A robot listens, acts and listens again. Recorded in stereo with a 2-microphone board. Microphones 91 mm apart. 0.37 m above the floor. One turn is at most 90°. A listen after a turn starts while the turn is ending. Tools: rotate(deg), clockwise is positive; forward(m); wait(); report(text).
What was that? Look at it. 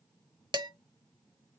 rotate(50)
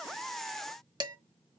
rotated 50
rotate(60)
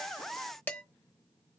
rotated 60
rotate(-25)
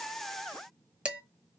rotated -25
rotate(15)
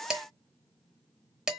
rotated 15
rotate(10)
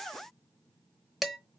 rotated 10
report("Facing the dishes clattering, under 1 m away.")